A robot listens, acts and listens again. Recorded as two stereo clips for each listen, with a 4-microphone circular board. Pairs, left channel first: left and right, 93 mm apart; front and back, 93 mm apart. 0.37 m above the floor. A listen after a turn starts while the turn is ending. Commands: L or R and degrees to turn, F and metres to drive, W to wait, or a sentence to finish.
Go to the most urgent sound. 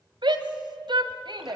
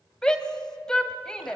R80
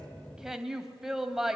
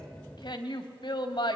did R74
F1.0
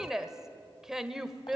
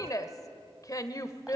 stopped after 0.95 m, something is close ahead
R10
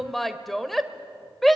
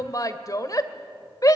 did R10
Arrived at the shout, straight ahead.